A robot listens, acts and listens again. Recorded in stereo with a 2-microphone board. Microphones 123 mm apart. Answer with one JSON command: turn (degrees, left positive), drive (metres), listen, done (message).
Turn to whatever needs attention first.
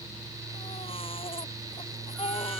{"turn": 50}
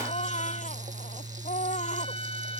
{"turn": 80}
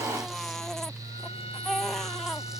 {"done": "Found it: a baby crying, straight ahead."}